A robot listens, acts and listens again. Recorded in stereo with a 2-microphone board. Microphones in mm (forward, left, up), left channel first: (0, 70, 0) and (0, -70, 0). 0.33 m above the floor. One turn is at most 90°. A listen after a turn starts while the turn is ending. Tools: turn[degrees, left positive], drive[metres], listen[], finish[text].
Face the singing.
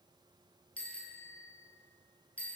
Action: listen[]
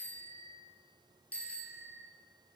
Action: listen[]
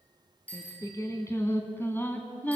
Action: turn[30]
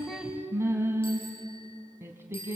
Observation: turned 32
Thought: So it is at 20° right.
Action: turn[-20]
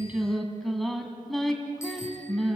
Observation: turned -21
Action: finish[Found it: singing, straight ahead.]